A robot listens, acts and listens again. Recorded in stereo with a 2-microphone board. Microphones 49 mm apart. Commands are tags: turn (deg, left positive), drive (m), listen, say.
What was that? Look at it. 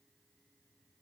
<listen/>
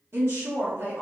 <turn deg="-60"/>
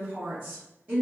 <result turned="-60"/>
<turn deg="-45"/>
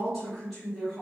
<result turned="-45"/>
<say>Facing the woman speaking, 1 to 2 m away.</say>